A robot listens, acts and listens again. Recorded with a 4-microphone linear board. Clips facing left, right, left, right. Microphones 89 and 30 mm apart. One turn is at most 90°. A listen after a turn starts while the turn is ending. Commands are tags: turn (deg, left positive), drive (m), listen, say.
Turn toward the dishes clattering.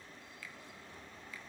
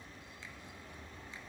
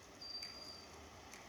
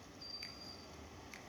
<listen/>
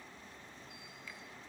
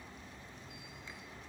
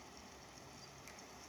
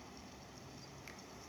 <listen/>
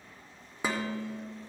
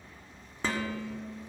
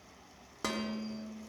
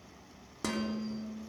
<turn deg="30"/>
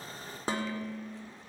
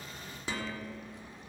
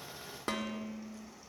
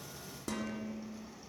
<turn deg="90"/>
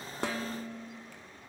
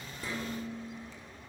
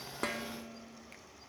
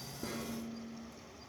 <turn deg="80"/>
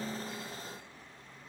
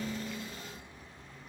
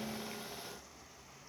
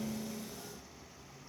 <listen/>
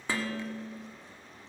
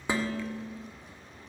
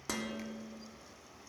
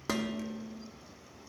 <turn deg="-20"/>
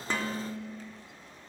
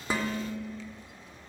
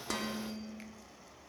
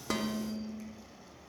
<turn deg="10"/>
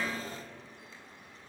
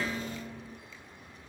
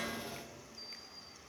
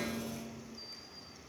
<say>Found it: dishes clattering, straight ahead.</say>